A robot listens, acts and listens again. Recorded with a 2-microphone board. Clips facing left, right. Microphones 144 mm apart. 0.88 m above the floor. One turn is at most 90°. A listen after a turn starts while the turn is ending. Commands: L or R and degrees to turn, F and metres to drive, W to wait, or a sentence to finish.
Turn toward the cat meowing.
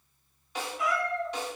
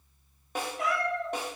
R50
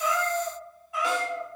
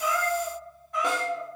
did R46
L10
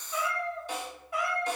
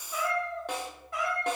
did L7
L10
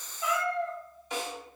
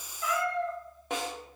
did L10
L10
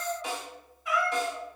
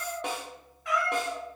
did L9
Found it: a cat meowing, straight ahead.